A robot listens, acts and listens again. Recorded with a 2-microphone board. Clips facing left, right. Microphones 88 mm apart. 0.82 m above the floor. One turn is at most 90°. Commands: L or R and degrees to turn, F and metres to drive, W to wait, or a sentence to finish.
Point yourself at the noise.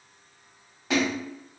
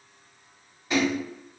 L75
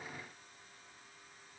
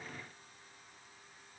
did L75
W
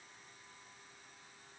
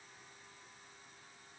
I heard a splash, but can't make it out now. It was about straight ahead or 30° left.